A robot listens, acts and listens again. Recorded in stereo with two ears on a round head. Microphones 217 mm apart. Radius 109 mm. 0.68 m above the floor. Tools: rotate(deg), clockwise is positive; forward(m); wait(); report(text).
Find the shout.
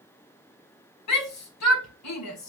rotate(-90)
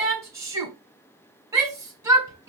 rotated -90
rotate(15)
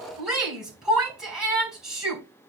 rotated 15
report("Facing the shout, over 4 m away.")